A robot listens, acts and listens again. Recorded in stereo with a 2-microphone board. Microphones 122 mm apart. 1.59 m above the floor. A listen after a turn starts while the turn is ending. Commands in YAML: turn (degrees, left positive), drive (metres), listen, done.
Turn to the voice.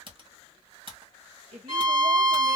turn: -90
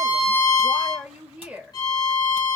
turn: -10
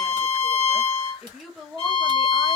done: "Facing the woman speaking."